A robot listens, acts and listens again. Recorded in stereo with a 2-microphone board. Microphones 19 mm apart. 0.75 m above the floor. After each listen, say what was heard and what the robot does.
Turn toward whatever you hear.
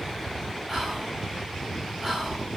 The whispering: about 25° right or 155° right. Turn 25° right.
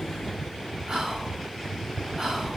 So it is at 125° right. Turn 125° right.
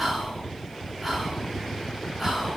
The whispering is now 10° right. Turn 10° right.
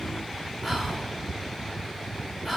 Facing the whispering.